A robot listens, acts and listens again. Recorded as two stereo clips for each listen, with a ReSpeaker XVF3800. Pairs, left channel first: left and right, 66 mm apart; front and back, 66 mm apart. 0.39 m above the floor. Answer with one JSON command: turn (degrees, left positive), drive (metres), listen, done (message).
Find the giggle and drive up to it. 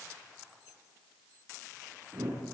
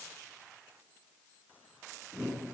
{"listen": true}
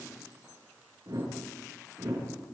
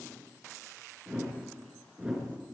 {"listen": true}
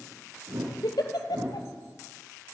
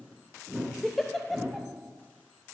{"turn": 90}
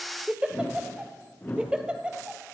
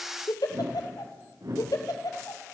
{"turn": -15}
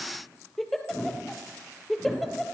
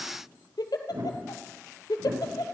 {"drive": 1.0}
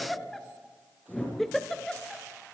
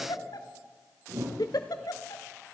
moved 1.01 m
{"drive": 1.0}
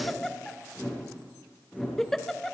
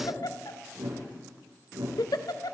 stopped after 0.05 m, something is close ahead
{"done": "Arrived at the giggle, straight ahead."}